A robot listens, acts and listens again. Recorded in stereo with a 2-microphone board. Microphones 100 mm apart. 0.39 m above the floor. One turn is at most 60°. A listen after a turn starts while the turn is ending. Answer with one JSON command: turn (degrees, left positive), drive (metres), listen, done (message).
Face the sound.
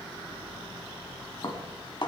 {"turn": 50}
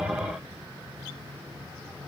{"listen": true}
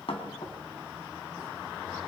{"turn": 60}
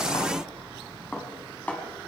{"turn": 15}
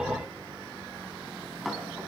{"done": "Found it: dishes clattering, straight ahead, 2 to 4 m away."}